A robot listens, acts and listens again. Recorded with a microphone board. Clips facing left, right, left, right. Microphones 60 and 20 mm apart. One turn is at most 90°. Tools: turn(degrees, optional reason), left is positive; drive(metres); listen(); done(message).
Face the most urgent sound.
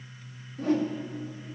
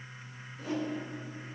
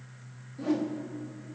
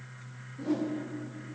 listen()
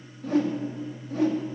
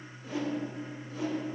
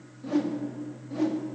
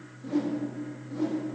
listen()
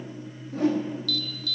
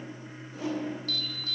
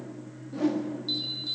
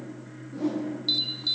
turn(degrees=-35, reason="The alarm: about 35° right or 145° right.")
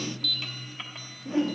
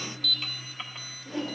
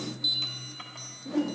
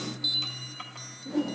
done("Facing the alarm.")